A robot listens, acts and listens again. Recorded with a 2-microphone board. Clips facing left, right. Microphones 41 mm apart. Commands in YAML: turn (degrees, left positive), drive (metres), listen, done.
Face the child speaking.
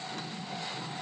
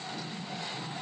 listen: true
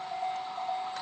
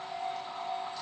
listen: true
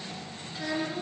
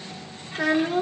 turn: -65
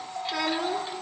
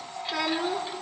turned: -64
done: "Facing the child speaking, 2 to 4 m away."